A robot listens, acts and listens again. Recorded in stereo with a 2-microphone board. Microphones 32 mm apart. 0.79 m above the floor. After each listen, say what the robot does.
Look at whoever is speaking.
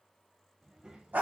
Turn 25° right.
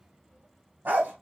Turn 135° right.
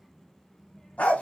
Turn 10° left.
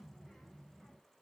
Facing the child speaking, 1 to 2 m away.